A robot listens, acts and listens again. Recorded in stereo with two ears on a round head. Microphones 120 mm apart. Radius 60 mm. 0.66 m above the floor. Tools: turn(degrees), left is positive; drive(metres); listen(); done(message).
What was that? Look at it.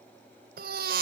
turn(degrees=-75)
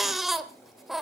done("Facing the baby crying.")